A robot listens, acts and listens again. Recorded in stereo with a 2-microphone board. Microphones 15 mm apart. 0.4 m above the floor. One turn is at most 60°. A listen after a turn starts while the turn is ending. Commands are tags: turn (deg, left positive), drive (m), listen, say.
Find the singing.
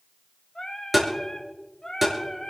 <turn deg="50"/>
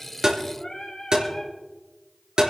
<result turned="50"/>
<turn deg="60"/>
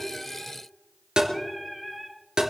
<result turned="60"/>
<turn deg="15"/>
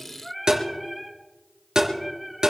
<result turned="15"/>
<say>Found it: singing, straight ahead, 2 to 4 m away.</say>